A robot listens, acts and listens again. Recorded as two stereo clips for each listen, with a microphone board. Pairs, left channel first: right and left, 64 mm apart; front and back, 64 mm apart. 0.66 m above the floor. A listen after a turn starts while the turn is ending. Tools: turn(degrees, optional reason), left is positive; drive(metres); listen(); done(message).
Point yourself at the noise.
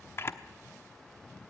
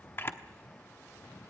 turn(degrees=-45, reason="The camera shutter: 45° right.")
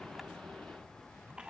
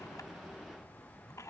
turn(degrees=20, reason="The camera shutter is now 20° left.")
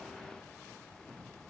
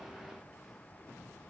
listen()
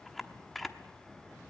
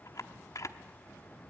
done("Found it: a camera shutter, straight ahead, 1 to 2 m away.")